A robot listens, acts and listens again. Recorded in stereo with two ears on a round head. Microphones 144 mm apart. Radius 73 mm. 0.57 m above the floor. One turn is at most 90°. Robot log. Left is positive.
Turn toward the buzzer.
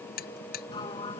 note: The buzzer: about 60° left or 120° left.
cmd yaw +60
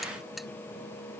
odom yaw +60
cmd idle
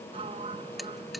cmd idle
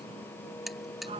end: Found it: a buzzer, straight ahead.